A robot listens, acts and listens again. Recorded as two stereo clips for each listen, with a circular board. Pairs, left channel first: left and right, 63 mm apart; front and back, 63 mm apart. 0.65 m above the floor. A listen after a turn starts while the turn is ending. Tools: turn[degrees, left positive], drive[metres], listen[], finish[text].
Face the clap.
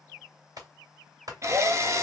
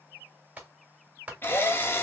Thought: The clap: 110° right.
Action: turn[-110]
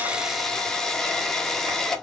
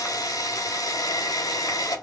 Action: listen[]
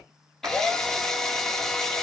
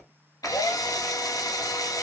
Thought: The clap is now 50° right.
Action: turn[-50]
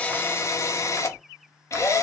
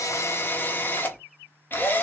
Action: listen[]
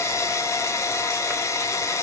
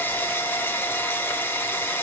Action: listen[]
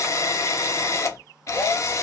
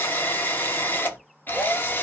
Action: finish[Facing where the clap came from. I can't hear it now.]